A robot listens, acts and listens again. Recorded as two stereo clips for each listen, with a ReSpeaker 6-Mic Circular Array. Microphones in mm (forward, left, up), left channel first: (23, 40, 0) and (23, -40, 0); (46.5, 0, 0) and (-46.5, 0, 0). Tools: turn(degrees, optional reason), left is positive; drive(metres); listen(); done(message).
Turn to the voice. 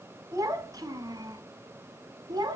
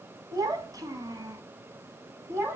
turn(degrees=-120, reason="The child speaking: 120° right.")
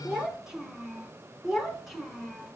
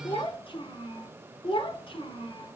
done("Found it: a child speaking, straight ahead, 2 to 4 m away.")